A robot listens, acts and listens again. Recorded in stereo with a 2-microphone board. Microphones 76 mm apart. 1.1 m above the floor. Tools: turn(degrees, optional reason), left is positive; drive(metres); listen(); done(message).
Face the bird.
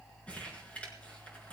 listen()
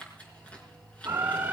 turn(degrees=-25, reason="The bird: about 25° right or 155° right.")
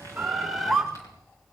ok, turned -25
done("Found it: a bird, straight ahead.")